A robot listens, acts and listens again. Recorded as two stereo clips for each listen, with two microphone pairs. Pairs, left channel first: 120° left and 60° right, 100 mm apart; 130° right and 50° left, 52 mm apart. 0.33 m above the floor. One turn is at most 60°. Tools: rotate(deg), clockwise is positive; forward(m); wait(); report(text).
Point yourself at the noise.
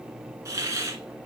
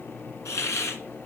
rotate(60)
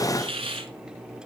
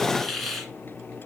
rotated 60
rotate(40)
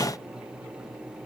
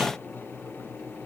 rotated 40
wait()
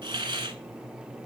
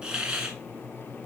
rotate(25)
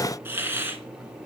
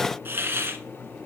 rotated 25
report("Facing the hiss.")